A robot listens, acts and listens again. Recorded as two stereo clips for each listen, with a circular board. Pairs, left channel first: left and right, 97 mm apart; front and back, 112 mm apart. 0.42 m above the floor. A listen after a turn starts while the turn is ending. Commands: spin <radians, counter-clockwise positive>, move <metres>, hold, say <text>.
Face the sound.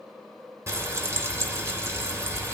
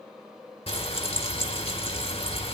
spin -0.52
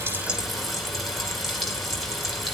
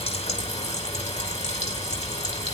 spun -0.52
say Facing the frying.